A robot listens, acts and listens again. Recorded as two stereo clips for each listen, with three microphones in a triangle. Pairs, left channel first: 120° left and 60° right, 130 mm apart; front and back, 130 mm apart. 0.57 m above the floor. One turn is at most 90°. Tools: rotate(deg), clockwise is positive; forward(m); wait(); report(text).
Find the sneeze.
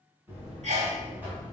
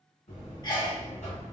rotate(50)
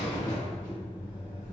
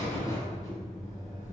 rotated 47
report("Facing where the sneeze came from. I can't hear it now.")